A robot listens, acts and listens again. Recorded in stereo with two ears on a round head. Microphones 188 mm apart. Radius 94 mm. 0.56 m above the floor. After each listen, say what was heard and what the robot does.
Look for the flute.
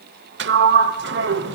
Keep listening.
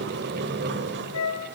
Turn 90° left.
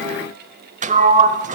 Keep listening.
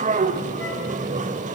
Keep listening.
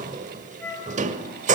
The flute is now 10° left. Turn 10° left.
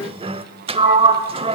Keep listening.
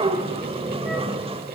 Keep listening.
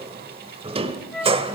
Found it: a flute, straight ahead.